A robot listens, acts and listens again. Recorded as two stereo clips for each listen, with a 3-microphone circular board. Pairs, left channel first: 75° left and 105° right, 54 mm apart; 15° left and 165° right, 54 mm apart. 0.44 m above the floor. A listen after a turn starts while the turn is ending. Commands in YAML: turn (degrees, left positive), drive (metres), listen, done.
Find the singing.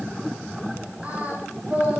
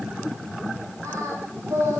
turn: -165
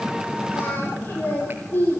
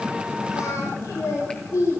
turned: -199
turn: 25
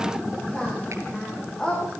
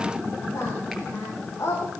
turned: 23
done: "Facing the singing, over 4 m away."